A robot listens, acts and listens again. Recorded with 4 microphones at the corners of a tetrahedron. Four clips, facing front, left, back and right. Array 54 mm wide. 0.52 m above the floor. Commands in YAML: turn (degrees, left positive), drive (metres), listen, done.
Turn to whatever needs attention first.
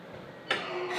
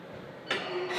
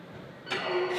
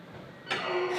turn: 25
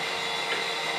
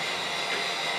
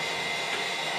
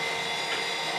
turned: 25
listen: true
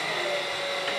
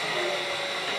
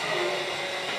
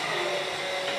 listen: true
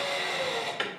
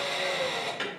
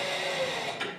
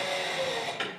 done: "Found it: an alarm, straight ahead."